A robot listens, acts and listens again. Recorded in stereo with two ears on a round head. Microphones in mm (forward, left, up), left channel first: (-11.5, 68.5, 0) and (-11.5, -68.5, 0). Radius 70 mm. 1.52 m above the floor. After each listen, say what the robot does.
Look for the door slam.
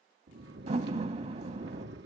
Turn 45° right.
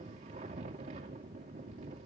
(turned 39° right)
Keep listening.
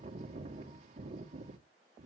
I heard a door slam, but can't make it out now. It was about 5° right or 95° right.